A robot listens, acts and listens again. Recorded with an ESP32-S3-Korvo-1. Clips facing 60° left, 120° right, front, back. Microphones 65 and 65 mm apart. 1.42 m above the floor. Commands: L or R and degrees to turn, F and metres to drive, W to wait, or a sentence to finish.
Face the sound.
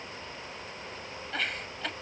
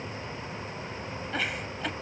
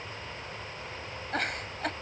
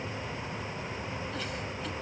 R35
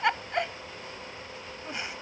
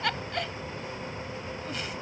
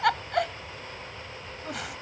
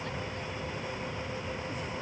R10
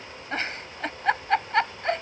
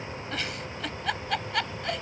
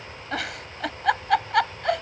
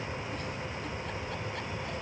Found it: a giggle, straight ahead.